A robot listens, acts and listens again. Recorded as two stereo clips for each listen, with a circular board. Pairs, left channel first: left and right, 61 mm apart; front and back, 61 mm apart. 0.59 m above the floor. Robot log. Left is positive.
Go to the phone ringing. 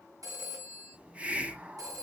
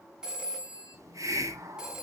note: The phone ringing: 105° right.
cmd yaw -105
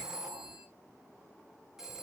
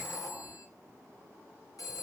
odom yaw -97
cmd fwd 1.0
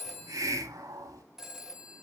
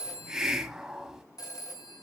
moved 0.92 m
cmd fwd 1.0
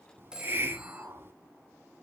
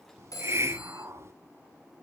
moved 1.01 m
note: The phone ringing is now 15° right.
cmd yaw -15
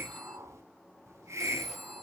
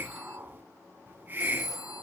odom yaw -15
cmd fwd 1.0
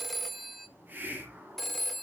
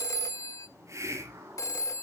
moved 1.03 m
cmd fwd 1.0
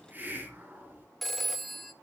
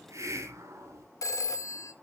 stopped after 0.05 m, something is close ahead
end: I am next to the phone ringing.